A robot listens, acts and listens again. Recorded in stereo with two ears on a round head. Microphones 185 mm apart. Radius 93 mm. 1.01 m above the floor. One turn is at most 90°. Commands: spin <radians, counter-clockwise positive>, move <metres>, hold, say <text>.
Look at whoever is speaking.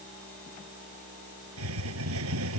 hold
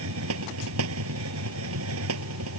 hold
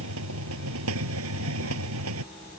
spin 0.61
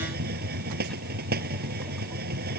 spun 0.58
hold
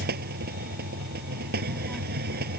hold
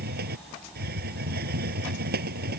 say Facing the child speaking.